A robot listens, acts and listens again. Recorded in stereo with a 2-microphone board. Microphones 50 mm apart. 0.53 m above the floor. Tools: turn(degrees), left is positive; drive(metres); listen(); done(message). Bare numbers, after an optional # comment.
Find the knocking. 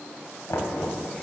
turn(90)
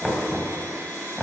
# So it is at 10° right.
turn(-10)
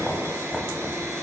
done("Found it: knocking, straight ahead, 2 to 4 m away.")